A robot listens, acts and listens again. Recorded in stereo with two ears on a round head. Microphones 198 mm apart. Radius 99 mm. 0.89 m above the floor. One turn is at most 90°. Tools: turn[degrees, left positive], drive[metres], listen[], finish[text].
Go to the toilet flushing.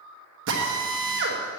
Action: listen[]
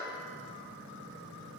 Action: listen[]
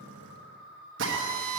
Action: finish[I can't make out a toilet flushing, only a drill.]